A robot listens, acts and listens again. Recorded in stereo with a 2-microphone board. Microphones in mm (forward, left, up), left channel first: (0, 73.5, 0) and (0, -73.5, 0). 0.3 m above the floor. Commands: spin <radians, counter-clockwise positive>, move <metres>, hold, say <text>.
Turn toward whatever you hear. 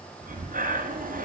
spin -1.31
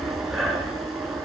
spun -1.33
say Facing the breathing.